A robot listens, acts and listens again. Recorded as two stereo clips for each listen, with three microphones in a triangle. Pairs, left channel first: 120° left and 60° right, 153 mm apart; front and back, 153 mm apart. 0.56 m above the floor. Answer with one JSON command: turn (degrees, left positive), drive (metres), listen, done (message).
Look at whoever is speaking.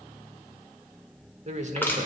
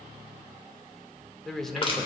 {"turn": -90}
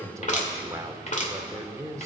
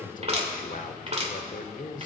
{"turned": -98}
{"turn": 10}
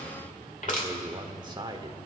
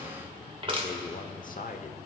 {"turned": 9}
{"done": "Facing the man speaking."}